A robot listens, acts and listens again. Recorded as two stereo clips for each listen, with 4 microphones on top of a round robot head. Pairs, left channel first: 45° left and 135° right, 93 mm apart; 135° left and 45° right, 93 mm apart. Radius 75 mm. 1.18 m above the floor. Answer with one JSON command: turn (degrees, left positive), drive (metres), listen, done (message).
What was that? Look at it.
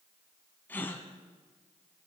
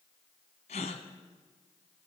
{"turn": 120}
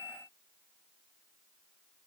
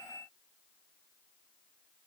{"done": "Facing where the gasp came from. I can't hear it now."}